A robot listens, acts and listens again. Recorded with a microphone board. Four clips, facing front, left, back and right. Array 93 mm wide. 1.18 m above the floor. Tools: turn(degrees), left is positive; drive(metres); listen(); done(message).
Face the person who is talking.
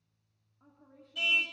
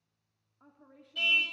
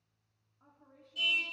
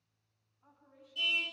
turn(degrees=90)
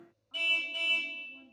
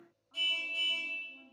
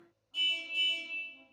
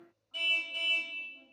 listen()
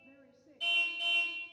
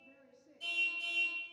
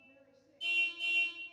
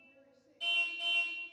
turn(degrees=15)
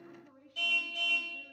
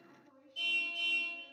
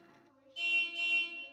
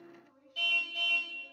done("Found it: a woman speaking, straight ahead.")